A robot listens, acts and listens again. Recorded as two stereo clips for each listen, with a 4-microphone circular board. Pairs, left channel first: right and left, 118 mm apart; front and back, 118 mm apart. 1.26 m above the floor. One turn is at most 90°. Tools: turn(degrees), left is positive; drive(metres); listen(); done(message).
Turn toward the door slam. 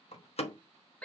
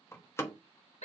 turn(degrees=-65)
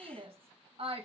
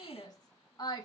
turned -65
done("Facing where the door slam came from. I can't hear it now.")